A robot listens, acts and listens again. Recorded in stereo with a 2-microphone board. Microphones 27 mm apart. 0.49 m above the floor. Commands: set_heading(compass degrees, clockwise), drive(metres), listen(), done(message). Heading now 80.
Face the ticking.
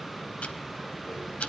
set_heading(15)
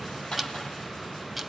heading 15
done("Found it: ticking, straight ahead.")